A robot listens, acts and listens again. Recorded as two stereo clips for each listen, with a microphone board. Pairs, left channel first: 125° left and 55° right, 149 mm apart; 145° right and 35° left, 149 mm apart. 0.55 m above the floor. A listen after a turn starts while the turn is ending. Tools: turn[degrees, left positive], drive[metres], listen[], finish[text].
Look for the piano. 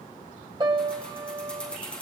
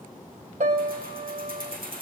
Action: finish[Found it: a piano, straight ahead, 1 to 2 m away.]